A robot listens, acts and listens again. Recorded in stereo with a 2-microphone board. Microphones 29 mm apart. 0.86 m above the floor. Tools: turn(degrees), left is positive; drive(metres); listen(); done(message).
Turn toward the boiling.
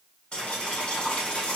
turn(degrees=40)
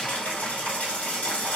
turn(degrees=105)
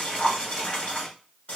turn(degrees=50)
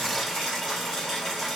done("Facing the boiling, 1 to 2 m away.")